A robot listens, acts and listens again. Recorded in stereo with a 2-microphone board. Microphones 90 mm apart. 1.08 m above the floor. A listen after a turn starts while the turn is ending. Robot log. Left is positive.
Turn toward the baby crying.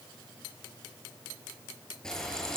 cmd idle
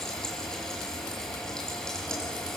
cmd idle
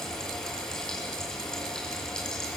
end: I can't make out a baby crying, only frying.